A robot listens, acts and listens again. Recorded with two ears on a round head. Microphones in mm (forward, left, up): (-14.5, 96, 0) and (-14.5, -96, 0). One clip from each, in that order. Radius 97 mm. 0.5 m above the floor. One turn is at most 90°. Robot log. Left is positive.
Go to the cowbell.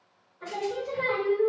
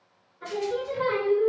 cmd idle
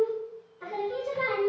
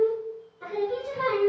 cmd idle
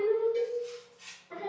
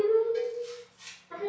cmd yaw -30
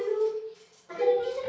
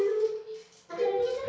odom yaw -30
note: So it is at 135° right.
cmd yaw -90
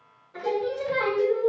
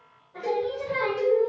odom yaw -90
note: Nothing new. It was at 45° right.
cmd yaw -45
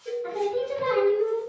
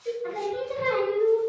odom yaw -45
note: The cowbell is now 25° right.
cmd yaw -25
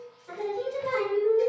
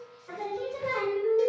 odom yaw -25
note: The cowbell is now 30° right.
cmd yaw -30
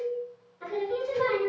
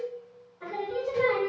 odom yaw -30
note: The cowbell is now 10° right.
cmd yaw -10
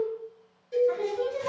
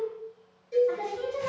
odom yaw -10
cmd fwd 1.0
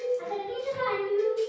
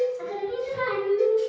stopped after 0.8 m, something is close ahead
end: I am next to the cowbell.